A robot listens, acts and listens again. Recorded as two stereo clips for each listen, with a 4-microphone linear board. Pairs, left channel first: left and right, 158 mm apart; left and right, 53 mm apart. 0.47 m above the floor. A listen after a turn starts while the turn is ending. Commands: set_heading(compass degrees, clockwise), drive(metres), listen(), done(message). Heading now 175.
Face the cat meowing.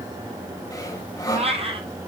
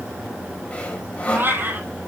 set_heading(210)
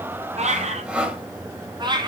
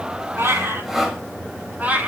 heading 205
set_heading(230)
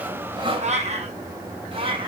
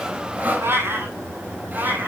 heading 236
set_heading(271)
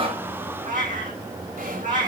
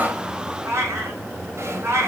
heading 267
set_heading(32)
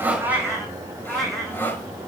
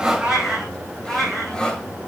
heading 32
done("Facing the cat meowing, 2 to 4 m away.")